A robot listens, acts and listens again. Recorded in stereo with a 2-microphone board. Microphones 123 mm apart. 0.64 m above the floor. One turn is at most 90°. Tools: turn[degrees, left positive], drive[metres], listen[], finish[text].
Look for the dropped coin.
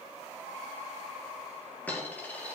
Action: turn[30]
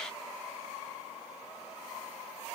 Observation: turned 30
Action: listen[]
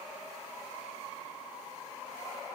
Action: finish[I heard a dropped coin, but can't make it out now. It was about 15° right or 135° left.]